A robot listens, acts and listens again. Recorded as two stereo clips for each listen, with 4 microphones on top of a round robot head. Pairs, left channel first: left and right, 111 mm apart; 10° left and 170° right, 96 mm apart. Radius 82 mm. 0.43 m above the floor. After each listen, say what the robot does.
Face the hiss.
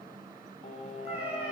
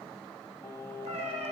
Keep listening.
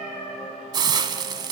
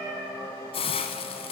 Turn 40° right.
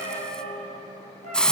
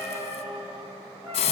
Found it: a hiss, straight ahead.